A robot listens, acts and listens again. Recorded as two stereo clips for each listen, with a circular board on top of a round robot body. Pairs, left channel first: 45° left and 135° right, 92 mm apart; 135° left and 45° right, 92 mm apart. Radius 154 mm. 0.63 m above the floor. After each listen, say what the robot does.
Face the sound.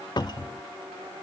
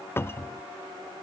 Turn 75° left.
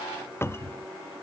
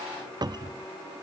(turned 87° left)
Turn 15° right.
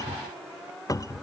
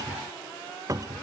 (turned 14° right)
Facing the cupboard door.